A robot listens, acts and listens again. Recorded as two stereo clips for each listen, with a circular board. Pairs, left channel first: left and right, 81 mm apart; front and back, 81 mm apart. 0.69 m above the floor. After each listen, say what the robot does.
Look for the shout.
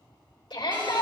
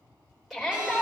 Turn 95° left.
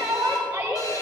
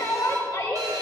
Turn 30° right.
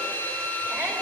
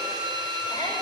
Keep listening.
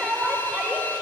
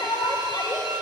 Facing the shout, 2 to 4 m away.